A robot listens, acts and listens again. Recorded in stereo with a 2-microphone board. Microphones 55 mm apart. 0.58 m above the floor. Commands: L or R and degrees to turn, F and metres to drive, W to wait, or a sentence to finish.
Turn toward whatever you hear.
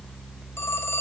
L50
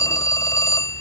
L80
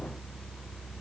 W
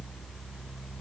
W
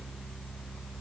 I heard a phone ringing from this way, but can't make it out now.